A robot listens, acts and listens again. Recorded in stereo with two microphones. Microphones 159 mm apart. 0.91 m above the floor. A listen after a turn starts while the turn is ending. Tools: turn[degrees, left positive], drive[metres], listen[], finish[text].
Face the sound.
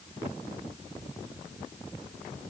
Action: listen[]
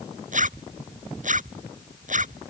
Thought: The zipper: about 55° right or 125° right.
Action: turn[-55]
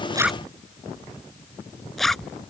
Action: finish[Found it: a zipper, straight ahead.]